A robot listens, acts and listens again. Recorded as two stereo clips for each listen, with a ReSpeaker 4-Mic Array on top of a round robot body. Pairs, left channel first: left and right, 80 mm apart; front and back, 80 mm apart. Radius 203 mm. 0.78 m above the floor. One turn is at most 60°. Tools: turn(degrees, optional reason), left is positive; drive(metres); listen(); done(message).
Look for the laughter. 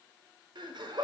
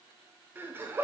turn(degrees=-60, reason="The laughter: 115° right.")
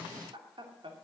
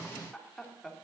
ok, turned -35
turn(degrees=-60, reason="The laughter is now 90° right.")
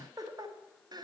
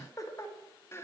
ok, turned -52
turn(degrees=-60, reason="The laughter is now 60° right.")
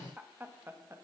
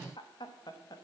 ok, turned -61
turn(degrees=-30, reason="The laughter is now 30° right.")
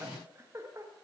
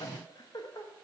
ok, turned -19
turn(degrees=-40, reason="The laughter is now 40° right.")
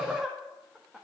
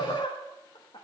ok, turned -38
done("Facing the laughter, 1 to 2 m away.")